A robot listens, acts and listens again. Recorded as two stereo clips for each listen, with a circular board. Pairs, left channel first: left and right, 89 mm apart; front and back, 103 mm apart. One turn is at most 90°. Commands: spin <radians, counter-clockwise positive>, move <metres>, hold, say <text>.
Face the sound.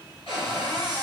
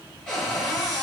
spin 1.40
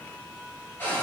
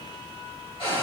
spin 0.44
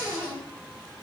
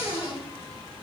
spin -0.26
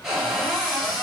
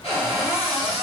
say Found it: a cupboard door, straight ahead, 1 to 2 m away.